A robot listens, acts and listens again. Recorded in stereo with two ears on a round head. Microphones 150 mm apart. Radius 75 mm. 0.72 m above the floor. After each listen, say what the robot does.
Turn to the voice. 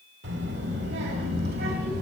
Turn 65° right.
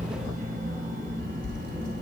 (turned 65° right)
Turn 55° right.
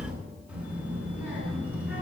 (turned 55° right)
Turn 10° right.
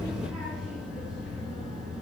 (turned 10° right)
Facing the child speaking.